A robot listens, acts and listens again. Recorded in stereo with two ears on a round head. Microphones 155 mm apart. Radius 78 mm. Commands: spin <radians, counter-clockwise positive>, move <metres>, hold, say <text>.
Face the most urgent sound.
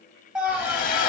spin -0.52
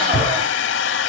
spin -2.53
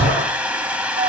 spin -0.61
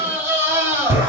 spin -0.26
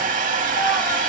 hold
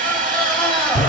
say Found it: a scream, straight ahead.